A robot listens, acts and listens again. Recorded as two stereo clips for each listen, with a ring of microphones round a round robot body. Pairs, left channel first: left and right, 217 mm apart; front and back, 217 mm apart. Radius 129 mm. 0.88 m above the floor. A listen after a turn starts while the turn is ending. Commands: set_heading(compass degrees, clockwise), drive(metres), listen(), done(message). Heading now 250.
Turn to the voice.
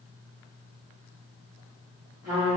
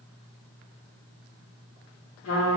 listen()
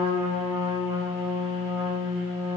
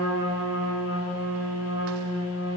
listen()
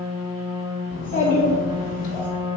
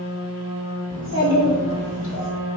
set_heading(215)
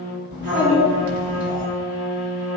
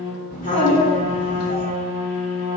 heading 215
done("Facing the child speaking.")